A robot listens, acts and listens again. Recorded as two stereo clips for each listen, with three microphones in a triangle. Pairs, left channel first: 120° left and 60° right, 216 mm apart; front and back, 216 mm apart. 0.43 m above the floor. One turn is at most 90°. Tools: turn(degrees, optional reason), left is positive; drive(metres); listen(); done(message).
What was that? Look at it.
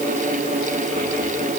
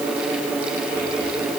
listen()
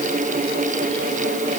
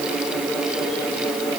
listen()
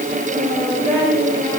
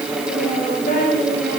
turn(degrees=45, reason="The child speaking: 45° left.")
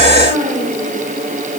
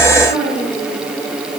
done("Facing the child speaking.")